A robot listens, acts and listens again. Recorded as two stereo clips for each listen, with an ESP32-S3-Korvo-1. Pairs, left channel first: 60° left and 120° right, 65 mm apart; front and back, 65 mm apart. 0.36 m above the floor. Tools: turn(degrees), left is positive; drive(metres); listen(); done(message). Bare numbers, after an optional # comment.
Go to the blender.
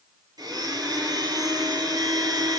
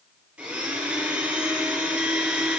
# The blender: 105° right.
turn(-105)
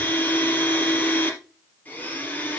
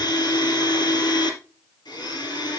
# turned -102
drive(1.0)
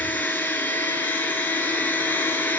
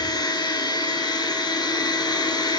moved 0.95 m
drive(1.0)
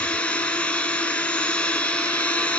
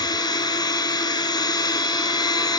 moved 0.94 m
# The blender is now 15° right.
turn(-15)
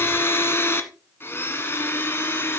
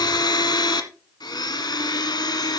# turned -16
drive(1.0)
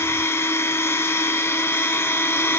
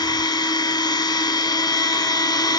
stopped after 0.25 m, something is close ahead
done("I am next to the blender.")